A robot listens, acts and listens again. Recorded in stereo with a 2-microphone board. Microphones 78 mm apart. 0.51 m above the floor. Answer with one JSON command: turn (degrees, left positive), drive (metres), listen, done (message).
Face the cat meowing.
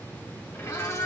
{"turn": 35}
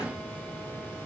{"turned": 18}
{"listen": true}
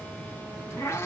{"turn": 35}
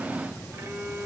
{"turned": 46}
{"listen": true}
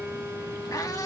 {"turn": 135}
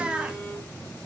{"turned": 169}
{"turn": -10}
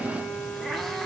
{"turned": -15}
{"done": "Found it: a cat meowing, straight ahead."}